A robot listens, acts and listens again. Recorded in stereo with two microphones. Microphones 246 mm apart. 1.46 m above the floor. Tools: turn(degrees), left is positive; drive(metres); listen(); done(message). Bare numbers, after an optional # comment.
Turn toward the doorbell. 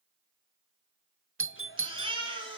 # The doorbell: about 55° right or 125° right.
turn(-55)
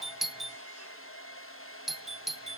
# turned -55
done("Facing the doorbell, under 1 m away.")